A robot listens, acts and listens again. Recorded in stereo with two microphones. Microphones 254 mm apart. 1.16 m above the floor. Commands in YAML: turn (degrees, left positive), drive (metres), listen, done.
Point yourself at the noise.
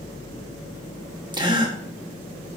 turn: -20
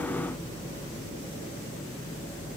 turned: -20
listen: true
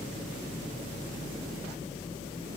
done: "I heard a gasp, but can't make it out now. It was about straight ahead or 140° right."